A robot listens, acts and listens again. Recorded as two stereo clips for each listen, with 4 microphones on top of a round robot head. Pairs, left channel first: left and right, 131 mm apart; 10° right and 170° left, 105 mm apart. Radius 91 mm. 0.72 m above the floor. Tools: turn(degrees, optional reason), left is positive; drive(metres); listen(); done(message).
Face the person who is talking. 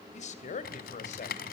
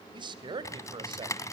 turn(degrees=125, reason="The man speaking: 125° left.")
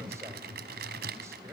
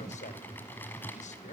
listen()
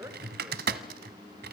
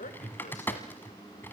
turn(degrees=-15, reason="The man speaking is now 15° right.")
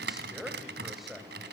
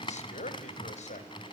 done("Found it: a man speaking, straight ahead, 2 to 4 m away.")